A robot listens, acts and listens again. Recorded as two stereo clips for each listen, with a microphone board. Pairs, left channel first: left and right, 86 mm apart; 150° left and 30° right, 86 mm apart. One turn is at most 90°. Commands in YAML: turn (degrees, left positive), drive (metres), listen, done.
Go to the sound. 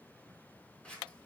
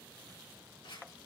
turn: 90
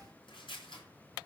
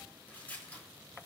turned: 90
turn: 75
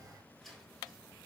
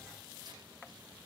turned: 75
listen: true
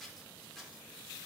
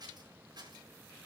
drive: 1.0
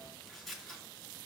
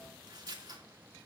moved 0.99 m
drive: 1.0
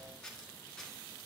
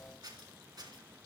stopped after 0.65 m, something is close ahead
done: "Blocked. The scissors is further on, straight ahead."